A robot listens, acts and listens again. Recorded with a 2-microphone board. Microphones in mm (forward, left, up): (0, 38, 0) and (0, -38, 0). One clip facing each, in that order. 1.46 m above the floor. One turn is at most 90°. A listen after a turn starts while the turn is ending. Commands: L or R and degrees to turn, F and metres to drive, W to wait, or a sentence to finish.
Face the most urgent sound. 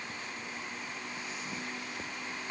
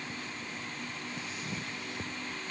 W
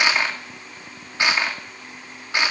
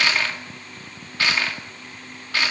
W
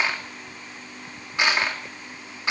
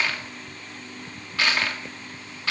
I can't make out anything urgent to turn to.